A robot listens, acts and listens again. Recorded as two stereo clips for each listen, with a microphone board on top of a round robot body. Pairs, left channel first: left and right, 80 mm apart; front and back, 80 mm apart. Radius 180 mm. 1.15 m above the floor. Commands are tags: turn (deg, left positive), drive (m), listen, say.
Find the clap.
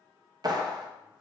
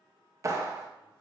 <turn deg="-130"/>
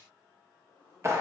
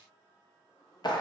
<turn deg="-35"/>
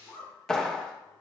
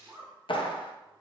<say>Facing the clap, under 1 m away.</say>